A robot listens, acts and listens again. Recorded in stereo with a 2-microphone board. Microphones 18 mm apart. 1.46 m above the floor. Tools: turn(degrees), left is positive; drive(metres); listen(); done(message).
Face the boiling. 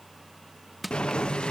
turn(degrees=70)
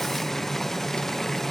turn(degrees=20)
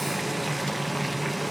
done("Found it: boiling, straight ahead.")